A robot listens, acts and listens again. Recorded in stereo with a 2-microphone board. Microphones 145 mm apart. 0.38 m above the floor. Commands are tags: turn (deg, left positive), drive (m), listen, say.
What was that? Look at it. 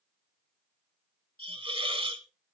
<turn deg="-40"/>
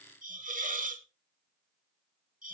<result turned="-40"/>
<turn deg="-100"/>
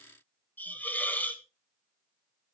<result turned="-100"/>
<turn deg="15"/>
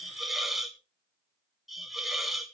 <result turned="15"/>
<say>Found it: a hiss, straight ahead, 1 to 2 m away.</say>